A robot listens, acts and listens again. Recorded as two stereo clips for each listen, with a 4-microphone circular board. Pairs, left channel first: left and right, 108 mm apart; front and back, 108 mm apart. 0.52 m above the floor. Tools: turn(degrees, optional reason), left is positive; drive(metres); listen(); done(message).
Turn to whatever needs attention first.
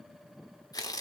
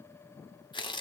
listen()
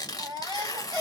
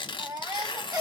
turn(degrees=-135, reason="The baby crying: 135° right.")
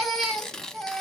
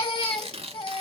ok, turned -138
done("Found it: a baby crying, straight ahead, 1 to 2 m away.")